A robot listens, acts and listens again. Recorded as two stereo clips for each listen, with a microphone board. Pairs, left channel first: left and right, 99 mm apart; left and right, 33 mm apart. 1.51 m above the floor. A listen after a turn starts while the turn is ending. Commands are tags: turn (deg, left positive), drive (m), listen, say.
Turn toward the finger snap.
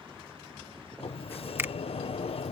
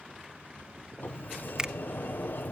<turn deg="-20"/>
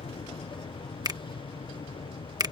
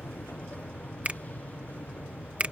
<turn deg="-140"/>
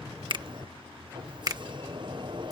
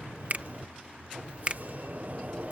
<turn deg="-40"/>
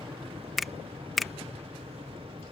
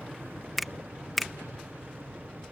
<say>Found it: a finger snap, straight ahead.</say>